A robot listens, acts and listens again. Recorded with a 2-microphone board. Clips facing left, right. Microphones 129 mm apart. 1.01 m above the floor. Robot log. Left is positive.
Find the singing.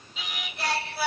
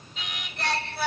cmd yaw +30
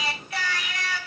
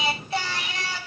note: So it is at 25° right.
cmd yaw -25
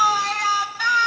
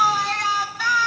end: Found it: singing, straight ahead.